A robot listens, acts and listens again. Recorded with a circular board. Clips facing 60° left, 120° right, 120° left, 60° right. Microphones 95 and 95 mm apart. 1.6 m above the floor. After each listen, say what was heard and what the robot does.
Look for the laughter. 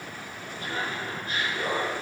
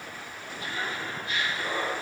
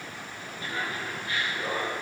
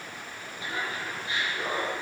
Facing the laughter, 2 to 4 m away.